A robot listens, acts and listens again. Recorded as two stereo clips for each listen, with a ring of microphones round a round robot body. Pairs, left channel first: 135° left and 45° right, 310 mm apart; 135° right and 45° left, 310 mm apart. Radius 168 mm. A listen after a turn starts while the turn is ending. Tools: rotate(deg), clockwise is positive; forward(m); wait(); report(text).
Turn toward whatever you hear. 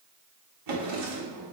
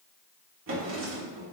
report("Facing the drawer, 1 to 2 m away.")